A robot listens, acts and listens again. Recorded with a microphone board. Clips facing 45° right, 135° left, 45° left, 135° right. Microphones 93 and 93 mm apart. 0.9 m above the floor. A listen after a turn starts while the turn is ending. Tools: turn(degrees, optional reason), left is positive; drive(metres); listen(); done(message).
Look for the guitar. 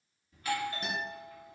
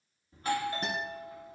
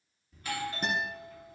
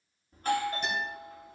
turn(degrees=85, reason="The guitar: 85° left.")
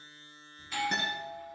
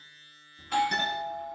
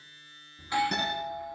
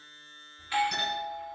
listen()
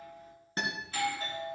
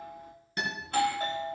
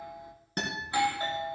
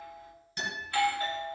turn(degrees=10, reason="The guitar is now 10° left.")
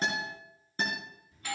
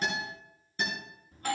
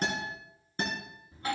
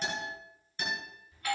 done("Facing the guitar.")